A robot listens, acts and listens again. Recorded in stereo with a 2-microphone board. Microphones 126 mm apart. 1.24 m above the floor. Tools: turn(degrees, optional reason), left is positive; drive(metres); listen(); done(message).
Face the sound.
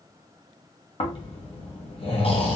turn(degrees=50, reason="The snoring: about 50° left or 130° left.")
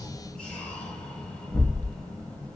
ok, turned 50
turn(degrees=10, reason="So it is at 10° left.")
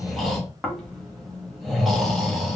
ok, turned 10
done("Found it: snoring, straight ahead.")